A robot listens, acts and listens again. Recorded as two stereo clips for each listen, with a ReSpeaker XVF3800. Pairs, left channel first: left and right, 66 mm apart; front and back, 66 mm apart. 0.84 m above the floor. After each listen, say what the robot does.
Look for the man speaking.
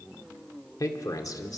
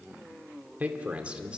Turn 105° left.
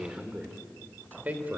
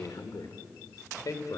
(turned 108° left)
Turn 30° right.
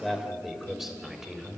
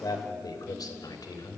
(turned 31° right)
Turn 10° right.
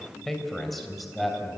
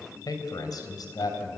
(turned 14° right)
Found it: a man speaking, straight ahead.